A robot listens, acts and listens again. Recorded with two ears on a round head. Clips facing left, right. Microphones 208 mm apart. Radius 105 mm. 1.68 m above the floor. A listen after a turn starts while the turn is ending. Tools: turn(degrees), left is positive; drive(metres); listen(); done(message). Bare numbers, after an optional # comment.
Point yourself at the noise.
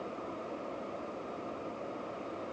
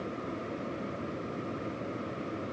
listen()
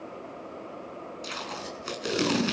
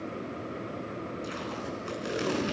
# The tape being pulled: about 55° left or 125° left.
turn(55)
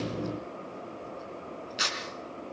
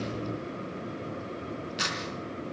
done("Facing the tape being pulled.")